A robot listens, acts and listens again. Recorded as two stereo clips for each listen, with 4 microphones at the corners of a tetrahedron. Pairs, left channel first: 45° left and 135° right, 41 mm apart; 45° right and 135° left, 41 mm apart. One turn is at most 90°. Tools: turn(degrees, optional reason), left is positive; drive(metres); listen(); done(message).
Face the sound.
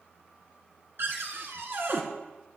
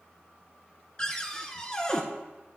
turn(degrees=-90, reason="The cupboard door: 115° right.")
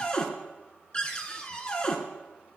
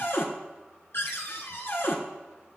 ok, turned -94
turn(degrees=-20, reason="The cupboard door is now 20° right.")
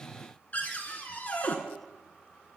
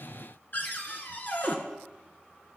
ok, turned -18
done("Facing the cupboard door.")